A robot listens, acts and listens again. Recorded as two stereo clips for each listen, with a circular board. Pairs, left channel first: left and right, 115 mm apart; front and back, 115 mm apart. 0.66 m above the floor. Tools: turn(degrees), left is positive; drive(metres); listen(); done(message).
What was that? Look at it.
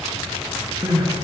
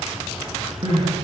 turn(degrees=-145)
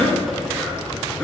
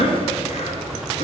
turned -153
turn(degrees=10)
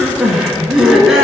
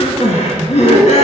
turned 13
done("Found it: crying, straight ahead.")